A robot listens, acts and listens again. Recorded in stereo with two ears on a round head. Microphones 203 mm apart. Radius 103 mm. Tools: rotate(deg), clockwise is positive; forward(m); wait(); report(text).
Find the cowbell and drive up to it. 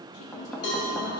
rotate(-75)
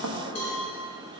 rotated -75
rotate(-30)
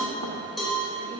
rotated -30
forward(1.0)
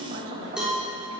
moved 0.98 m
forward(1.0)
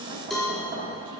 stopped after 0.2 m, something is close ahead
report("Arrived at the cowbell, straight ahead.")